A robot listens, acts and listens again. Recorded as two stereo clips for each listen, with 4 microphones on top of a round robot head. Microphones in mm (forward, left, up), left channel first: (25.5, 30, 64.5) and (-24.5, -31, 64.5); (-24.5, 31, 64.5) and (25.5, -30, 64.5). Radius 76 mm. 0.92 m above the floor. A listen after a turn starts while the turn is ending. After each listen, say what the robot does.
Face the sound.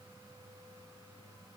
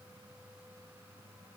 Keep listening.
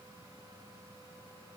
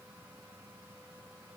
Keep listening.
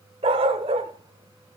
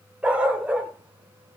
Turn 130° right.
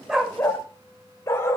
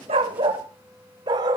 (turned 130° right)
Turn 10° right.
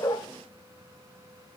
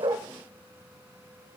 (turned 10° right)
Keep listening.
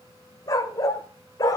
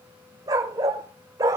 Found it: a dog barking, straight ahead.